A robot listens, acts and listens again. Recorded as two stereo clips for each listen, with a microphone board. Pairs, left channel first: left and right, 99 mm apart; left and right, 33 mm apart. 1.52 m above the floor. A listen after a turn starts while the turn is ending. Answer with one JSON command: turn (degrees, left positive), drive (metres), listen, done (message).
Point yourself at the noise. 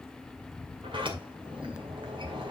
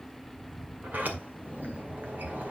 {"turn": -55}
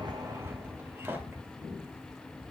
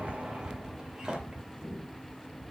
{"turn": -20}
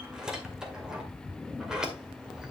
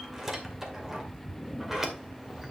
{"turn": -10}
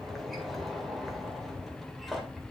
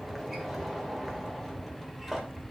{"done": "Facing the sliding door, 2 to 4 m away."}